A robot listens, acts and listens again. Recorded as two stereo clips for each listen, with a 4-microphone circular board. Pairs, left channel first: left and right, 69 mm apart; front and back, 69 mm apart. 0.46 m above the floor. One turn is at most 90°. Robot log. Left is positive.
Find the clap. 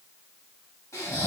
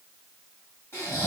cmd idle
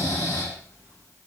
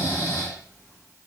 cmd idle
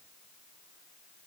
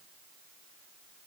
end: I can't make out a clap to turn to.